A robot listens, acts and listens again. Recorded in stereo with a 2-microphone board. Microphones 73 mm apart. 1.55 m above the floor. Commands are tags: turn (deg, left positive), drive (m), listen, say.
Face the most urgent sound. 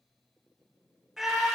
<turn deg="-30"/>
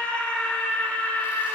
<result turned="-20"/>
<turn deg="15"/>
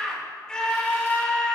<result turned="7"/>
<turn deg="10"/>
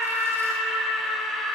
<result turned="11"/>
<say>Facing the scream.</say>